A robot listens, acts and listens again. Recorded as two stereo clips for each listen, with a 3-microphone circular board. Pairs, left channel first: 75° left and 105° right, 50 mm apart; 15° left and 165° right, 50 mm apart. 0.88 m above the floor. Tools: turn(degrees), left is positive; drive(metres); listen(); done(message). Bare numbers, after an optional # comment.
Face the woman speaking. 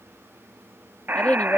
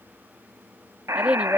# The woman speaking: 130° left.
turn(130)
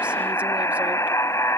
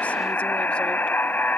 listen()
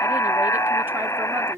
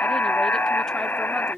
# The woman speaking is now 65° right.
turn(-65)
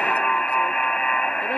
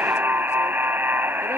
listen()
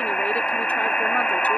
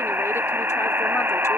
listen()
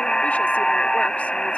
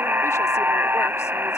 done("I heard a woman speaking from this way, but can't make it out now.")